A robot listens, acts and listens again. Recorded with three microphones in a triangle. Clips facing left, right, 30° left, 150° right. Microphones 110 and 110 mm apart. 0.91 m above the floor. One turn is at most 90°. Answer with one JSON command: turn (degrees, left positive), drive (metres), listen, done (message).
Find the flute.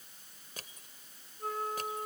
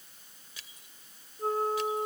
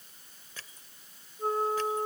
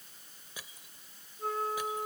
{"turn": -35}
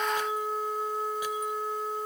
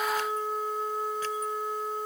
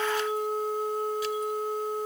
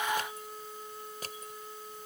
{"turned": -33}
{"done": "Found it: a flute, straight ahead."}